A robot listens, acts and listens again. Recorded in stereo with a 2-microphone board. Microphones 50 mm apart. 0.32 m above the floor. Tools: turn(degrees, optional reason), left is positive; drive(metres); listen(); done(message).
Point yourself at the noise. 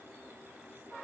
listen()
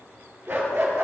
turn(degrees=-65, reason="The dog barking: about 65° right or 115° right.")
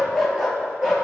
turn(degrees=-10, reason="So it is at 10° right.")
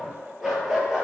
turn(degrees=-15, reason="The dog barking is now 15° right.")
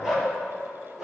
done("Found it: a dog barking, straight ahead.")